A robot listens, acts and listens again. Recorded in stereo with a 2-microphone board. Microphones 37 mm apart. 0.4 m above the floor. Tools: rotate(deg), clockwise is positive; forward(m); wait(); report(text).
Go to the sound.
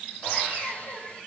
rotate(-35)
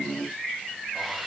forward(1.0)
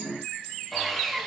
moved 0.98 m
forward(1.0)
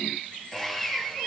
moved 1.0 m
forward(1.0)
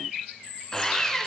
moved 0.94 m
rotate(-15)
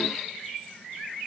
wait()
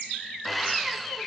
forward(1.0)
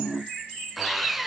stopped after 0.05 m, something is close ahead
report("I am next to the sawing.")